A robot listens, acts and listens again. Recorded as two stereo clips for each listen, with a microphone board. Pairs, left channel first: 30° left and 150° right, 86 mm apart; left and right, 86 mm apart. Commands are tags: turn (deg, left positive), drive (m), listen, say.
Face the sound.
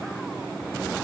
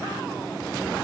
<listen/>
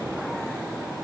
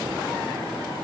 <listen/>
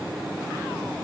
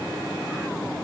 <say>I can't make out anything to turn to.</say>